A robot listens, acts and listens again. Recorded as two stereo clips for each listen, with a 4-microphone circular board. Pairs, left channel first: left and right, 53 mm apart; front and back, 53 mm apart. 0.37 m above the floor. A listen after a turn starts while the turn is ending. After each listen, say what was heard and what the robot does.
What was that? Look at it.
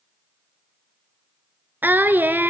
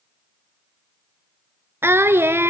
The singing: 140° right. Turn 140° right.
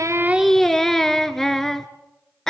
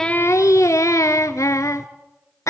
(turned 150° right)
The singing is now 10° left. Turn 10° left.
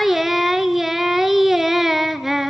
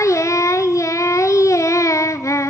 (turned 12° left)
Facing the singing, 1 to 2 m away.